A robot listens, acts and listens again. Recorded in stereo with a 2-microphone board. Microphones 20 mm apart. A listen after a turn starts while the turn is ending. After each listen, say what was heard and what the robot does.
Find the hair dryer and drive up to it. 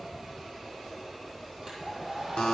The hair dryer: about 20° right or 160° right. Turn 20° right.
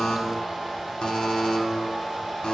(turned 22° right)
Drive 1.0 m forward.
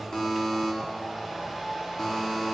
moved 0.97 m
Drive 1.0 m forward.
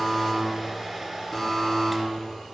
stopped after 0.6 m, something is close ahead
I am next to the hair dryer.